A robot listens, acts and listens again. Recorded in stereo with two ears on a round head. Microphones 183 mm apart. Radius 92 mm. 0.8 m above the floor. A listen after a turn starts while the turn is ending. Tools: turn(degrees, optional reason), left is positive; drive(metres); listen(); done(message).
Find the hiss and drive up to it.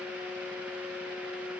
listen()
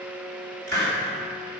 turn(degrees=-50, reason="The hiss: about 50° right or 130° right.")
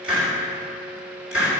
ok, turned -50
drive(metres=1.0)
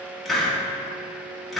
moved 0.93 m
drive(metres=1.0)
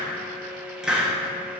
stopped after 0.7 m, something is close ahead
done("I am next to the hiss.")